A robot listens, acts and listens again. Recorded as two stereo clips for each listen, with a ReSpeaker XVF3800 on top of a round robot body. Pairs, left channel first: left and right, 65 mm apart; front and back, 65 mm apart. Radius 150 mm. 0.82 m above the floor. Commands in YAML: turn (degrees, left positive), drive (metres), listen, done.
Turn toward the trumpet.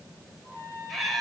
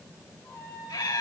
turn: 60
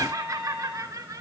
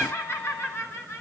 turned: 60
done: "Found it: a trumpet, straight ahead, over 4 m away."